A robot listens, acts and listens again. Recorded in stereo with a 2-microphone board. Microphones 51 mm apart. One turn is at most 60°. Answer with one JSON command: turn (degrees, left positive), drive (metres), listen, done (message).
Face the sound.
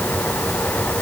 {"listen": true}
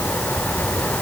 {"listen": true}
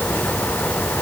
{"done": "I can't make out anything to turn to."}